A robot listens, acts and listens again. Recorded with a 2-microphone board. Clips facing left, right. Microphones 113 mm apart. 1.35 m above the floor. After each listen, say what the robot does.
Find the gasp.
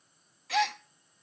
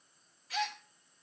Turn 90° left.
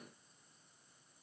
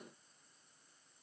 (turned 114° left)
Turn 25° right.
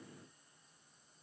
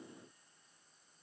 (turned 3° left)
Turn 25° right.
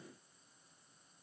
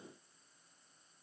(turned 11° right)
Turn 15° right.
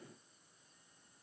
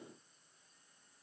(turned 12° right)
Facing where the gasp came from. I can't hear it now.